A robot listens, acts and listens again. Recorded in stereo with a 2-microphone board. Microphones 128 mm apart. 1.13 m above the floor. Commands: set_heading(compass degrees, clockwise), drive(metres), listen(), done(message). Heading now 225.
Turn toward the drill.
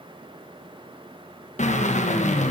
set_heading(155)
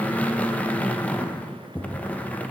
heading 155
set_heading(145)
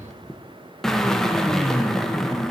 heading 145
done("Found it: a drill, straight ahead, 1 to 2 m away.")